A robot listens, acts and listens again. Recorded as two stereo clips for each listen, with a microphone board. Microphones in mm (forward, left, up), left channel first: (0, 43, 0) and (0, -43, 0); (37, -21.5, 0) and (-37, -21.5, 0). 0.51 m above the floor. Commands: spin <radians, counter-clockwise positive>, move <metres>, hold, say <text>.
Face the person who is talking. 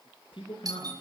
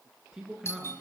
spin 1.75
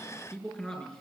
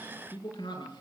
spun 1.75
spin 0.17
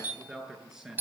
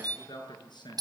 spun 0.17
say Facing the man speaking, over 4 m away.